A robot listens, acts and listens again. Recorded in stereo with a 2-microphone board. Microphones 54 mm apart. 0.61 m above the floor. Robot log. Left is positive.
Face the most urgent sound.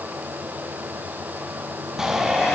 cmd yaw -30
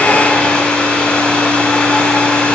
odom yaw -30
cmd idle
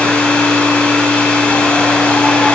cmd idle
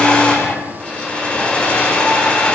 note: So it is at 20° left.
cmd yaw +20
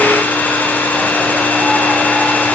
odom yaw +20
cmd idle
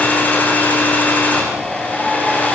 end: Found it: a shout, straight ahead, over 4 m away.